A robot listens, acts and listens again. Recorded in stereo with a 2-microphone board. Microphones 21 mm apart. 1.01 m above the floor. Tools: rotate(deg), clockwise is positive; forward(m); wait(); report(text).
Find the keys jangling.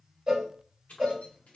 rotate(-90)
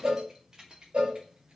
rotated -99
rotate(40)
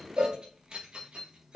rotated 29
rotate(55)
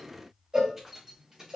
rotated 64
rotate(15)
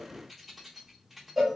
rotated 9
report("Facing the keys jangling.")